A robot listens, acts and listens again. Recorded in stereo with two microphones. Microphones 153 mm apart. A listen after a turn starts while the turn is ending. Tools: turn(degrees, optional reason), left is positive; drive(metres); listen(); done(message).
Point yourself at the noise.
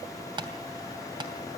turn(degrees=-30, reason="The tapping: about 30° right or 150° right.")
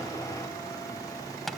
done("Facing the tapping, 2 to 4 m away.")